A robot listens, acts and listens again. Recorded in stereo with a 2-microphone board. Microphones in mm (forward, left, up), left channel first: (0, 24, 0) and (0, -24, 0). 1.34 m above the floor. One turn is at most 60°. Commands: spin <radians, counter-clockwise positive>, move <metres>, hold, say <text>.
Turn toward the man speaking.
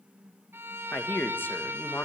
spin 0.87
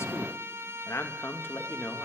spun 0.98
spin 0.96
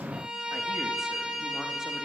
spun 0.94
hold
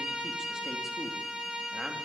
hold
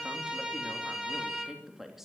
say Facing the man speaking.